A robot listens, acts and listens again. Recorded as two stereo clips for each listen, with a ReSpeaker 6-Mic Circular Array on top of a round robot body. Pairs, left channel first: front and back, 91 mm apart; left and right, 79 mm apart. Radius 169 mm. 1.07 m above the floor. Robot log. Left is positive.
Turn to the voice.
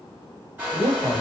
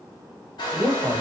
note: The man speaking: 135° right.
cmd yaw -135
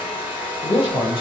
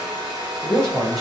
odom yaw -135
end: Found it: a man speaking, straight ahead, under 1 m away.